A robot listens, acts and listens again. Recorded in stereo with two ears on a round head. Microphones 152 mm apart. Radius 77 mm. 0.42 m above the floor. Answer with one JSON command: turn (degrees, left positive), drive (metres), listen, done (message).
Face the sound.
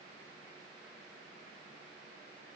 {"listen": true}
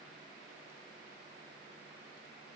{"listen": true}
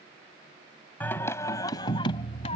{"turn": 35}
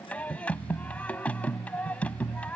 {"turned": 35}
{"turn": 10}
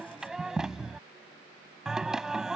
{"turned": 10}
{"done": "Found it: singing, straight ahead."}